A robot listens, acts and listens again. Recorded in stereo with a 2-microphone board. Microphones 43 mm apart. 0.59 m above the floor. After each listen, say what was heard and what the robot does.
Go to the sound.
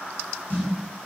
The snare drum: about 40° left or 140° left. Turn 40° left.
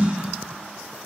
So it is at 100° left. Turn 100° left.
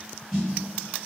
Drive 1.0 m forward.
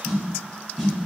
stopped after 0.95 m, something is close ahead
Arrived at the snare drum, straight ahead.